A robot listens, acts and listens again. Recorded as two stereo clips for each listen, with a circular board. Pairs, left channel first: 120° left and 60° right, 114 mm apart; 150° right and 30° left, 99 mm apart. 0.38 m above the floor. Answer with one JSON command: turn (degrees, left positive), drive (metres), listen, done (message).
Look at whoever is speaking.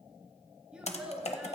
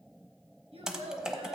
{"turn": 20}
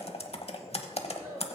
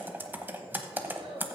{"done": "Facing the child speaking, 2 to 4 m away."}